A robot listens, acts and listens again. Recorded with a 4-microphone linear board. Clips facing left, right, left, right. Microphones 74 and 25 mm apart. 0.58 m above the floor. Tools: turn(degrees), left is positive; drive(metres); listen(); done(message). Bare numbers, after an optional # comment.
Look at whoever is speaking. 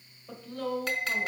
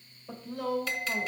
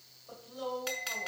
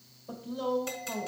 turn(30)
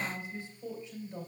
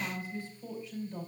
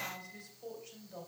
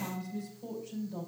# So it is at 155° left.
turn(155)
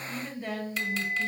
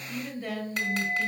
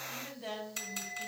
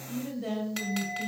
done("Facing the woman speaking.")